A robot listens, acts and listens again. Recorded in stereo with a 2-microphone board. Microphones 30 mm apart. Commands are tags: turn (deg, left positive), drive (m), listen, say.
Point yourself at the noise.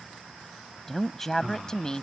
<turn deg="25"/>
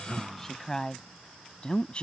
<turn deg="35"/>
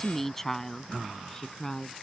<turn deg="20"/>
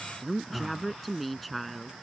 <say>Found it: a woman speaking, straight ahead.</say>